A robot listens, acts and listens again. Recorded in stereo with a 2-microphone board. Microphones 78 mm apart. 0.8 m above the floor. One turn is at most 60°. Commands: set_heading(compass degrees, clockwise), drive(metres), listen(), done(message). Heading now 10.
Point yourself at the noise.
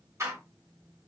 set_heading(50)
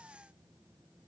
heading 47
listen()
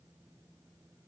done("I heard a door slam, but can't make it out now. It was about straight ahead or 105° right.")